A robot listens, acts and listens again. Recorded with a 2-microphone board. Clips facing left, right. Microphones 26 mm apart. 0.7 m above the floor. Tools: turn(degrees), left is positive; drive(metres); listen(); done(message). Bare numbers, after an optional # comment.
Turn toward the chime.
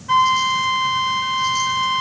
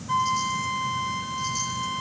listen()
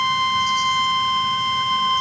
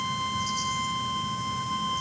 listen()
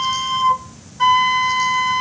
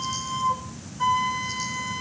done("I can't make out a chime, only a flute.")